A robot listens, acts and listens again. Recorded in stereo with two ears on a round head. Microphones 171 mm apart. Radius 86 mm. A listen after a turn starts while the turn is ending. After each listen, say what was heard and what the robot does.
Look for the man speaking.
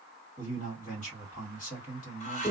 The man speaking: about 40° left or 140° left. Turn 40° left.
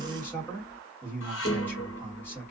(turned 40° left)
So it is at 15° left. Turn 15° left.
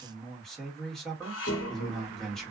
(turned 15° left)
Facing the man speaking.